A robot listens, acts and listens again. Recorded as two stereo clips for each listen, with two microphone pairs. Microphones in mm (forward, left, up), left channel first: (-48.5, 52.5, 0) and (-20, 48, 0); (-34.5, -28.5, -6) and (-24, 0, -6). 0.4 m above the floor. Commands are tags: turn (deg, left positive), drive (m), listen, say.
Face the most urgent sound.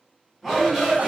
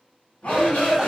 <turn deg="-90"/>
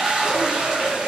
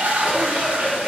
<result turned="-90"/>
<turn deg="-30"/>
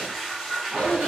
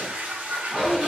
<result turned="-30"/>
<say>Facing the shout.</say>